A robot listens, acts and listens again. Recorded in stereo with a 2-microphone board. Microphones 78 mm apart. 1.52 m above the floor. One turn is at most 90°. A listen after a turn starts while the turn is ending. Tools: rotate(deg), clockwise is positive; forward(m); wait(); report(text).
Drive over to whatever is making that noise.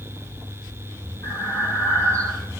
rotate(-30)
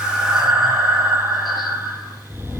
forward(1.0)
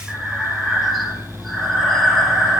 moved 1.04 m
forward(1.0)
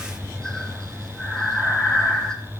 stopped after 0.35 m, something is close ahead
rotate(-10)
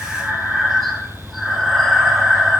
report("I am next to the breathing.")